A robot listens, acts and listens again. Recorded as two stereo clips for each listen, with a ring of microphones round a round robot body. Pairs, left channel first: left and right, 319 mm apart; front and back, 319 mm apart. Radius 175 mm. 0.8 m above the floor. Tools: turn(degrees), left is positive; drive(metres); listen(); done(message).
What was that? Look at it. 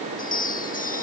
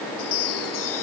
turn(degrees=25)
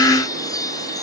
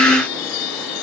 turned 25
turn(degrees=10)
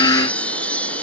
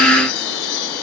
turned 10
done("Facing the chime.")